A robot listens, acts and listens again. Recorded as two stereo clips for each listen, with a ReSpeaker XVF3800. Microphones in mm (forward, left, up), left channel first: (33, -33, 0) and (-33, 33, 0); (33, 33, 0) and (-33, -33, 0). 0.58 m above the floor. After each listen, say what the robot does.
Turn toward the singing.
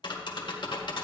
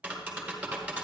Keep listening.
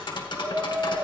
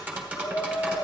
Turn 95° left.
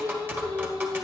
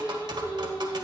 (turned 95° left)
Found it: singing, straight ahead, over 4 m away.